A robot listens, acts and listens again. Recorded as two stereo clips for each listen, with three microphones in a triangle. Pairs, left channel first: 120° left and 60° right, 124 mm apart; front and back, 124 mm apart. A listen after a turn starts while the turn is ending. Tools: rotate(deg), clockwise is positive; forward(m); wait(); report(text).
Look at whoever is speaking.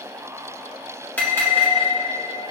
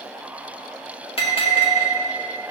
wait()
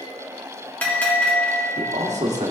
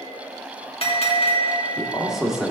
rotate(95)
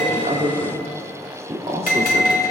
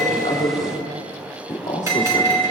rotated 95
rotate(20)
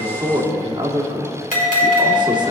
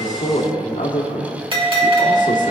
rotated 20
report("Facing the man speaking.")